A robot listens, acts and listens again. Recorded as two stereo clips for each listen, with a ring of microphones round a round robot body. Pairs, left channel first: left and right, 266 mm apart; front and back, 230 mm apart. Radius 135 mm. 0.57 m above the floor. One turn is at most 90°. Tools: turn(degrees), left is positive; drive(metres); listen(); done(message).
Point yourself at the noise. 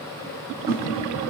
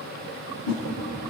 turn(degrees=-15)
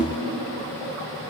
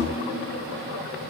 done("Found it: a whoosh, straight ahead.")